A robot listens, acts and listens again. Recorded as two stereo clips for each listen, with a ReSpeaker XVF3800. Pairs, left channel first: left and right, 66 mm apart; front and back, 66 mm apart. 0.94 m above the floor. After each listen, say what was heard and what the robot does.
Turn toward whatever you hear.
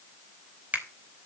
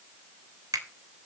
The finger snap: 160° right. Turn 160° right.
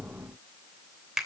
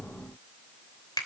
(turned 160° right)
Facing the finger snap, 2 to 4 m away.